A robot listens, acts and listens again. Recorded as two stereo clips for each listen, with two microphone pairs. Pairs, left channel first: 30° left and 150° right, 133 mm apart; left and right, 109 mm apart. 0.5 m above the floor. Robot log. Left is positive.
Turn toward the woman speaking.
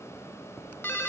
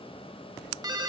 cmd idle
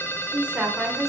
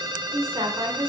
note: The woman speaking: 65° right.
cmd yaw -65
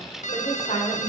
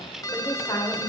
note: The woman speaking is now 50° left.
cmd yaw +50
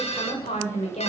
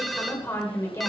note: The woman speaking is now 30° left.
cmd yaw +30
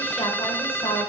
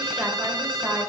cmd idle
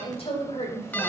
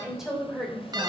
end: Facing the woman speaking.